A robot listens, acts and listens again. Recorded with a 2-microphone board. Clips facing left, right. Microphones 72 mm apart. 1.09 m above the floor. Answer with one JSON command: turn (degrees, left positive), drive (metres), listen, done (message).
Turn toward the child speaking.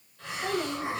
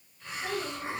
{"turn": 45}
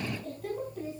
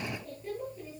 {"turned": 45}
{"turn": 90}
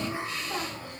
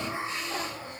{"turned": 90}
{"turn": 15}
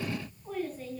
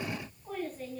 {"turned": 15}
{"done": "Found it: a child speaking, straight ahead, over 4 m away."}